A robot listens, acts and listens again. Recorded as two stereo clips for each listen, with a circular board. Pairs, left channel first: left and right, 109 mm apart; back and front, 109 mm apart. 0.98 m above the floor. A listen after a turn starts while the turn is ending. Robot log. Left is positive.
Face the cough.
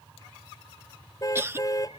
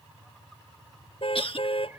note: The cough: 155° right.
cmd yaw -155
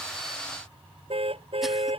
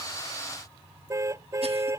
cmd idle
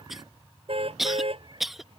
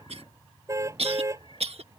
end: Found it: a cough, straight ahead.